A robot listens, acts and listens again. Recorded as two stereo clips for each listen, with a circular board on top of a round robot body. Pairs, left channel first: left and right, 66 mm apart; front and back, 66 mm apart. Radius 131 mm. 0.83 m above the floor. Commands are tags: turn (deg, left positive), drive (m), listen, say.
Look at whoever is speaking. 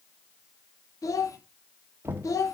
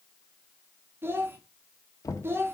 <turn deg="125"/>
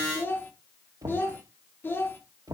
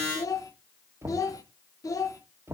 <turn deg="30"/>
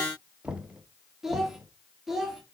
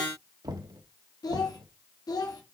<say>Facing the child speaking.</say>